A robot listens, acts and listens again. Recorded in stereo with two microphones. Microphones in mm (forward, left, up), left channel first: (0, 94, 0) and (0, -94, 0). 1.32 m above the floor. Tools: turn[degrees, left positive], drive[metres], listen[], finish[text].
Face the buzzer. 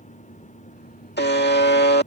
Thought: The buzzer: about 65° left or 115° left.
Action: turn[65]
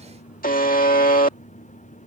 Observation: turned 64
Thought: So it is at 50° left.
Action: turn[50]
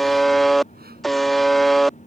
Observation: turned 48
Action: finish[Found it: a buzzer, straight ahead.]